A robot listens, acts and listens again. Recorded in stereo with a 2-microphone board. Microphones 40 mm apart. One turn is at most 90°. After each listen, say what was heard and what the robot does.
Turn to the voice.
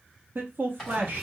The man speaking: about 60° right or 120° right. Turn 60° right.
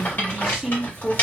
Found it: a man speaking, straight ahead.